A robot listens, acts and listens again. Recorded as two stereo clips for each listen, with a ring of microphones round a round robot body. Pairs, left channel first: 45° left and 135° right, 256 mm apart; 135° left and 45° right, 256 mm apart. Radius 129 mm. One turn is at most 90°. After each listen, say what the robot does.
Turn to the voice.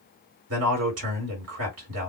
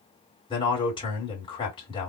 Turn 90° right.
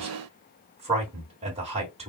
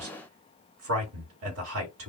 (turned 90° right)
Turn 70° right.
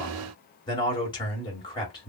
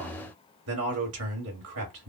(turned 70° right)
Turn 25° right.
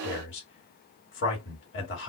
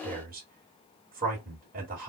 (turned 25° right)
Turn 10° left.
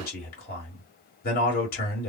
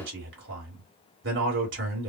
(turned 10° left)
Facing the man speaking, 1 to 2 m away.